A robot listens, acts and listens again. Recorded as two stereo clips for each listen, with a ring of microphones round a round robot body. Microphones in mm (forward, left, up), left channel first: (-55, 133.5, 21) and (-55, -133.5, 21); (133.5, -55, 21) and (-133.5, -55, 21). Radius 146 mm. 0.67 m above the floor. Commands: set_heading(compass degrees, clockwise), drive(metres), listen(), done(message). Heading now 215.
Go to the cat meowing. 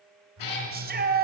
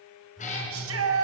set_heading(150)
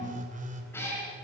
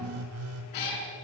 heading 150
set_heading(140)
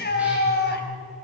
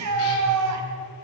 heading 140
listen()
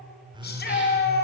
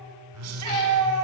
listen()
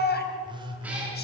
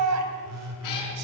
done("I heard a cat meowing from this way, but can't make it out now. I did not reach it.")